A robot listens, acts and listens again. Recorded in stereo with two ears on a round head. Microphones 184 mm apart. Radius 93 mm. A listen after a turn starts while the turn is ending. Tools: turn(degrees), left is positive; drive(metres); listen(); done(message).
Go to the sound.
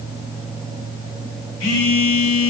turn(degrees=60)
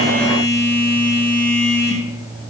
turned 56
turn(degrees=10)
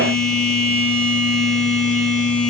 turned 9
drive(metres=1.0)
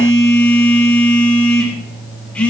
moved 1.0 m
drive(metres=1.0)
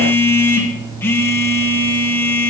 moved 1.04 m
turn(degrees=15)
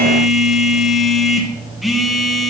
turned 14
drive(metres=1.0)
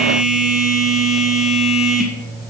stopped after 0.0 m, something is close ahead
done("I am next to the phone buzzing.")